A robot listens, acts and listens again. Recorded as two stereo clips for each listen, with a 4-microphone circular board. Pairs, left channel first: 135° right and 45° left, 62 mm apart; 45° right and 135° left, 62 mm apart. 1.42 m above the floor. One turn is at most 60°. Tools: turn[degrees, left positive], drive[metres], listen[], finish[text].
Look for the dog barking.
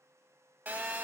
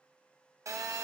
Action: listen[]
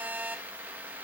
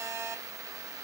Action: listen[]
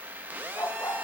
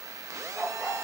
Thought: The dog barking: 130° right.
Action: turn[-60]
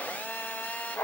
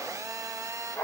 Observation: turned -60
Thought: The dog barking is now 90° right.
Action: turn[-60]
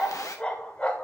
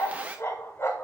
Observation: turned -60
Thought: The dog barking is now 70° right.
Action: turn[-60]
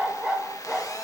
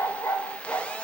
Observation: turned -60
Thought: The dog barking is now 35° right.
Action: turn[-35]
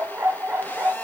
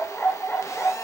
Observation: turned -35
Action: finish[Found it: a dog barking, straight ahead, 1 to 2 m away.]